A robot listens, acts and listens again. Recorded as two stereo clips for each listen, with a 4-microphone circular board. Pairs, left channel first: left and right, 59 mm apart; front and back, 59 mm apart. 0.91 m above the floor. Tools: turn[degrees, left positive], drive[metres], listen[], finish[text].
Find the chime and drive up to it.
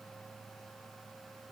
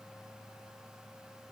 Action: listen[]
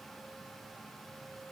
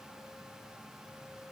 Action: listen[]
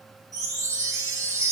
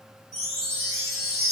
Thought: The chime: 95° right.
Action: turn[-95]
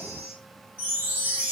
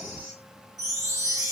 Thought: The chime is now 30° right.
Action: turn[-30]
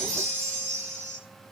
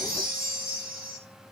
Action: drive[1.0]
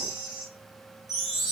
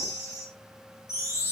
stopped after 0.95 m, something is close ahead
Action: finish[I am next to the chime.]